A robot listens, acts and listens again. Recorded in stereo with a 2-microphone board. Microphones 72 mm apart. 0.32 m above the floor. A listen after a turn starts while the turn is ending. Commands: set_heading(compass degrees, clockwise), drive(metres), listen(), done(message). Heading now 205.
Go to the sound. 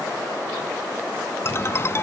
set_heading(170)
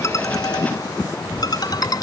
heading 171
set_heading(61)
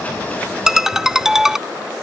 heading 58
drive(1.0)
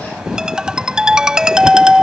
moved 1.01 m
set_heading(68)
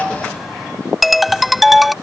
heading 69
drive(1.0)
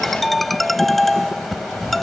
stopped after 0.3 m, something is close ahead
done("Arrived at the ringtone, straight ahead.")